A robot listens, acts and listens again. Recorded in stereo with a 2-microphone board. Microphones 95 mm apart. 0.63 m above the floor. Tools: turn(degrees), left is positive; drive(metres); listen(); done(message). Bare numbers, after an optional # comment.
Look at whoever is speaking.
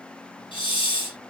listen()
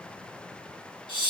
listen()
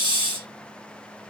done("I can't make out anyone speaking to turn to.")